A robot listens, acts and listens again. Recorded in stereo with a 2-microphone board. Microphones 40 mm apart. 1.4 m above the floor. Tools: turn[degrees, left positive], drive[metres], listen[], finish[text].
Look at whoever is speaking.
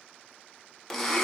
Action: listen[]
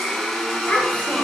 Thought: The child speaking: about 35° left or 145° left.
Action: turn[35]
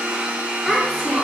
Thought: So it is at 10° right.
Action: turn[-10]
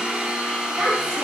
Thought: The child speaking is now 15° right.
Action: turn[-15]
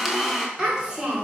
Thought: The child speaking is now 15° right.
Action: turn[-15]
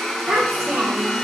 Action: finish[Facing the child speaking, 2 to 4 m away.]